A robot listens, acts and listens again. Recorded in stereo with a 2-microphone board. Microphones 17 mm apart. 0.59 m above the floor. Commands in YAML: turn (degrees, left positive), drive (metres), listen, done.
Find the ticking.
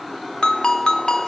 listen: true
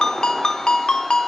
listen: true
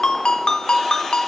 done: "I can't make out ticking to turn to."